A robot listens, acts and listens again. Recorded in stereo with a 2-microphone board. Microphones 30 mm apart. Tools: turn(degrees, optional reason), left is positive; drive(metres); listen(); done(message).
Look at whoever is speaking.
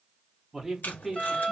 turn(degrees=-30)
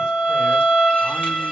listen()
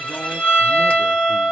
listen()
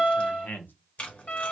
turn(degrees=75, reason="So it is at 75° left.")
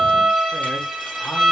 listen()
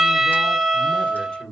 turn(degrees=35, reason="The man speaking is now 35° left.")
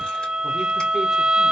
listen()
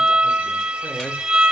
listen()
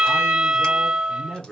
done("Facing the man speaking, 1 to 2 m away.")